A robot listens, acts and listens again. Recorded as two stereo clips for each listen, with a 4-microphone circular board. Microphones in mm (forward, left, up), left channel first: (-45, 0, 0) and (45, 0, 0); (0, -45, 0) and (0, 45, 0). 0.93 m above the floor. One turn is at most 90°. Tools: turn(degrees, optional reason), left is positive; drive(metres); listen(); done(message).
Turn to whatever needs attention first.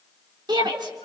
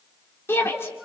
turn(degrees=-30, reason="The shout: 30° right.")
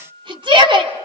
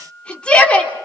turn(degrees=-15, reason="The shout is now 15° right.")
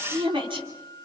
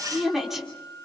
done("Found it: a shout, straight ahead, 2 to 4 m away.")